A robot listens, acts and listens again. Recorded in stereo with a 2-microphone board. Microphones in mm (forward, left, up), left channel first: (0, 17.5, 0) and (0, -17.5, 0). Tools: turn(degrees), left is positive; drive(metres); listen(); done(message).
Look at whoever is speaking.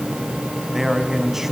turn(degrees=-30)
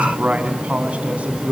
turn(degrees=-140)
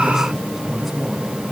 turn(degrees=-10)
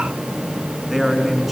done("Facing the man speaking, over 4 m away.")